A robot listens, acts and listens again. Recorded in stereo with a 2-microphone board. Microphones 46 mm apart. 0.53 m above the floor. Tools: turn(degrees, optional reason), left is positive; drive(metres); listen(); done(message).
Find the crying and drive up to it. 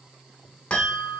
listen()
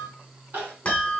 turn(degrees=-55, reason="The crying: about 55° right or 125° right.")
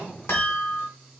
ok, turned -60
turn(degrees=-45, reason="So it is at 45° right.")
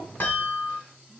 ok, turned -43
listen()
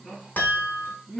drive(metres=1.0)
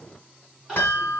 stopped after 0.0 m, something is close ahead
turn(degrees=-10, reason="The crying is now 10° right.")
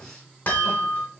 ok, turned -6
listen()
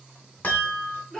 done("Blocked. The crying is further on, straight ahead.")